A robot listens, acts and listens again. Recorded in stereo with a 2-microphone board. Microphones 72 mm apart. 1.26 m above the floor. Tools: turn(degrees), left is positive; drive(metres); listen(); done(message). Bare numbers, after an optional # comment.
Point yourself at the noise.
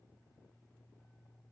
listen()
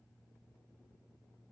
listen()
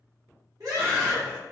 # The scream: about 55° right or 125° right.
turn(-55)
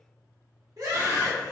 # So it is at 65° right.
turn(-65)
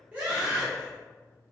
# The scream is now 20° right.
turn(-20)
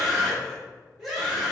done("Facing the scream, under 1 m away.")